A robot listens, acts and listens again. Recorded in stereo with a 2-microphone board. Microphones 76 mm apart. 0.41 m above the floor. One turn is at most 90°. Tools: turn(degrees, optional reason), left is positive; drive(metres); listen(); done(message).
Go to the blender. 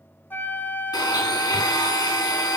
turn(degrees=65, reason="The blender: about 65° left or 115° left.")
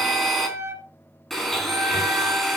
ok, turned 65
drive(metres=1.0)
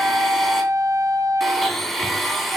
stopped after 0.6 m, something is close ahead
done("Blocked. The blender is further on, straight ahead.")